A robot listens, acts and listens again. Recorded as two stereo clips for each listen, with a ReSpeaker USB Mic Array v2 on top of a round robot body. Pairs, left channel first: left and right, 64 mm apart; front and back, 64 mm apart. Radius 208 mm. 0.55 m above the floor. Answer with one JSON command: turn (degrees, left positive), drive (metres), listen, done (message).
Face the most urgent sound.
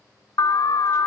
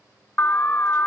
{"turn": 60}
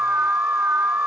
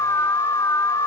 {"turn": -25}
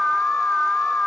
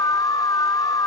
{"turn": 15}
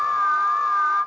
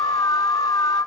{"done": "Found it: an alarm, straight ahead, under 1 m away."}